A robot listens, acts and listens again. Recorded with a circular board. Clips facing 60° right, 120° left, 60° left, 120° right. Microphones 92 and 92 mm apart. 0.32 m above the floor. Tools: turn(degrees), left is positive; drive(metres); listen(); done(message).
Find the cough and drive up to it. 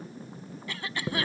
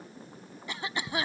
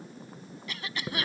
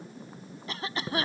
turn(degrees=-170)
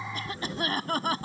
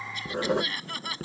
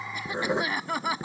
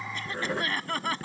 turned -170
turn(degrees=-20)
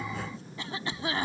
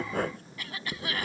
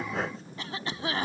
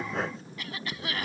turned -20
drive(metres=1.0)
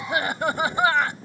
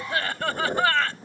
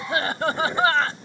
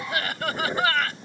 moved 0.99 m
drive(metres=1.0)
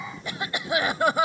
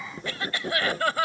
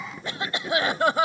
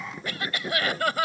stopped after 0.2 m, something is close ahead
done("I am next to the cough.")